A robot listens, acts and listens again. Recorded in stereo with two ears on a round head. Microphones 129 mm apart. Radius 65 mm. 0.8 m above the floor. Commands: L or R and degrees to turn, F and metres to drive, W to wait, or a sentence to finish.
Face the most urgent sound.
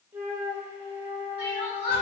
L40
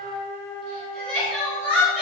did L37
L10
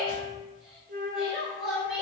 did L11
Facing the crying.